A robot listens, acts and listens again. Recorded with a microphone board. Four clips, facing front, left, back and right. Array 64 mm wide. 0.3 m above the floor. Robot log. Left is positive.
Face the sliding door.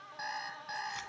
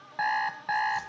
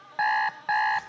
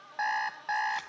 cmd idle
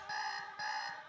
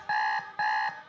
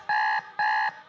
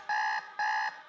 cmd idle
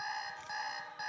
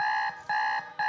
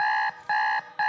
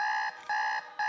end: I can't make out a sliding door to turn to.